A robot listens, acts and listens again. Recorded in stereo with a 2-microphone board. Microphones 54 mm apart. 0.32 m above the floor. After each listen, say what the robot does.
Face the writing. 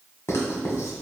Turn 60° left.
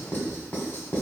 Turn 50° left.
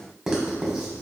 Found it: writing, straight ahead.